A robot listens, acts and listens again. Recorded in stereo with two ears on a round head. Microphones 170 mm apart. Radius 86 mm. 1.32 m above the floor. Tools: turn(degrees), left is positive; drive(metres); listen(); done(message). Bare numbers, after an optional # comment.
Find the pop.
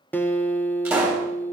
turn(-30)
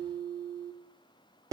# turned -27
listen()
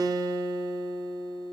done("I heard a pop, but can't make it out now. It was about 15° left or 140° right.")